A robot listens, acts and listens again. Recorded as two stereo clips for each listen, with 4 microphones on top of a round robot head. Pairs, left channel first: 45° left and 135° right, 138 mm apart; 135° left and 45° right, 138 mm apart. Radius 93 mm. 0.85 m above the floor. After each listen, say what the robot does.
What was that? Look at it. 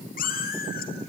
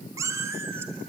Turn 30° left.
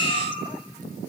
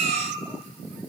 Turn 10° right.
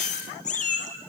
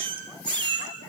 Turn 10° left.
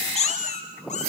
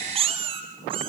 Facing the cat meowing.